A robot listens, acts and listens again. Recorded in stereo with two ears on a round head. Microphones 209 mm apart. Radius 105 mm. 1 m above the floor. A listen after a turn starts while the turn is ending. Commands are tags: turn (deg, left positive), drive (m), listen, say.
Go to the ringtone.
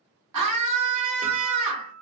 <listen/>
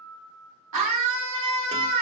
<listen/>
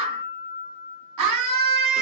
<say>I can't make out a ringtone to turn to.</say>